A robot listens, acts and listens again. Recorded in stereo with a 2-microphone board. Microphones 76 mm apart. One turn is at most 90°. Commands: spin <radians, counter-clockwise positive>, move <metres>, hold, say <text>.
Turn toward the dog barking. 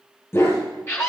spin 0.52
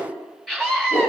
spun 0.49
spin 1.57
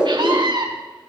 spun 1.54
spin 0.79
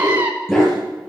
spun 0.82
spin 0.17
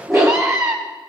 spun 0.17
say Facing the dog barking.